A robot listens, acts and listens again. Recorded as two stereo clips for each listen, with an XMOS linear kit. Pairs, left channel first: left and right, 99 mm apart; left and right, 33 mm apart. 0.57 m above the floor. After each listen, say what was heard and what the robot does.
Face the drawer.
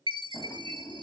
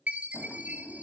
The drawer: about 40° left or 140° left. Turn 40° left.
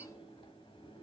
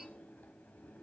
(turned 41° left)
So it is at 95° left. Turn 95° left.
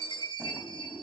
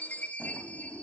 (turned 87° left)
The drawer is now 10° left. Turn 10° left.
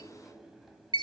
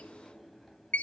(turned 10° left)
Found it: a drawer, straight ahead, 1 to 2 m away.